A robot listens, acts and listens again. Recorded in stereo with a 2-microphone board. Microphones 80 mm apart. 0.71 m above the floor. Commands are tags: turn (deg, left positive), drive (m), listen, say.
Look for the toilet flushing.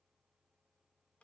<listen/>
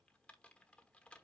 <listen/>
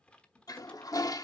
<turn deg="50"/>
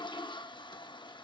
<turn deg="80"/>
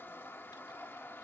<turn deg="25"/>
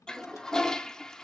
<say>Found it: a toilet flushing, straight ahead, under 1 m away.</say>